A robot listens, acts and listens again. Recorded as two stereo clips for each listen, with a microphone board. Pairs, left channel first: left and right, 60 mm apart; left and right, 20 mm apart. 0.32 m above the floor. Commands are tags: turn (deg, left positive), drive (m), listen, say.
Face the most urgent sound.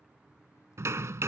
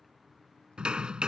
<listen/>
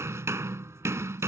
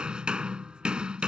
<listen/>
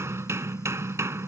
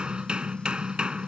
<say>I can't make out anything urgent to turn to.</say>